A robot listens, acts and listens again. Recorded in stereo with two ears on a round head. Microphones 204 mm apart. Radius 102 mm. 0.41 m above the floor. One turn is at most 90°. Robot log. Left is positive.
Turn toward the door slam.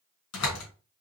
cmd yaw +90
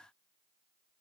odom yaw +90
end: I heard a door slam from this way, but can't make it out now.